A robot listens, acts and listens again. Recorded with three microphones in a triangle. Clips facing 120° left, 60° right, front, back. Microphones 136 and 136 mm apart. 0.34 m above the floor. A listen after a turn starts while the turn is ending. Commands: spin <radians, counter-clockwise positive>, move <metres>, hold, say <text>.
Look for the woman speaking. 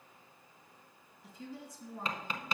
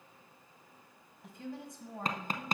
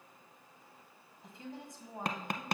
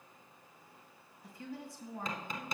spin -1.22
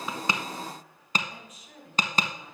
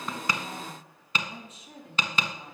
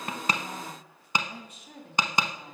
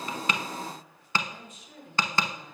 say Found it: a woman speaking, straight ahead, 2 to 4 m away.